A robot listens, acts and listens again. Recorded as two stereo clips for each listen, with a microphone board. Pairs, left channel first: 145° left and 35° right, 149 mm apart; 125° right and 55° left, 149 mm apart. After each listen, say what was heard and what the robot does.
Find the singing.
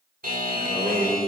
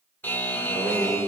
The singing: 10° right. Turn 10° right.
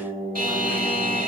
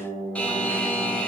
Found it: singing, straight ahead, 2 to 4 m away.